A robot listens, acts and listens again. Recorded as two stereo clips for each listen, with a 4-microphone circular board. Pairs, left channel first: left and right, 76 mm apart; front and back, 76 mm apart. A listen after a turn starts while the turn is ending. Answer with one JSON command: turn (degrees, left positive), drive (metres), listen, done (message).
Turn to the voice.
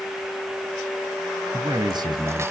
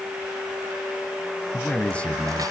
{"turn": -75}
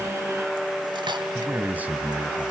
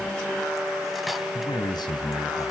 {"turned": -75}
{"turn": -20}
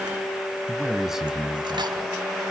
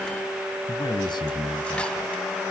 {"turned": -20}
{"done": "Found it: a man speaking, straight ahead."}